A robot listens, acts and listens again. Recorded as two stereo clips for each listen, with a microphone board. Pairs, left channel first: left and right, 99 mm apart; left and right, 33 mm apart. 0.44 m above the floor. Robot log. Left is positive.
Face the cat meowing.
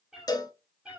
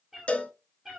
cmd yaw -30
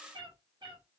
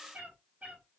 note: So it is at 130° right.
cmd yaw -130
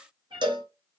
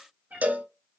note: The cat meowing is now 55° right.
cmd yaw -55
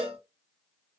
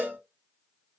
note: The cat meowing is now 10° right.
cmd yaw -10
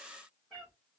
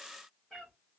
end: Found it: a cat meowing, straight ahead, 2 to 4 m away.